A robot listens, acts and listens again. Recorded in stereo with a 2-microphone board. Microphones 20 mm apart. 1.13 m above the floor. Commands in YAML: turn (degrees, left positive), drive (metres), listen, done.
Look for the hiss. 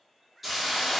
turn: -30
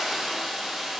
turn: -140
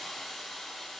turn: 25
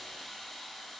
turn: 10
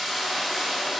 done: "Found it: a hiss, straight ahead."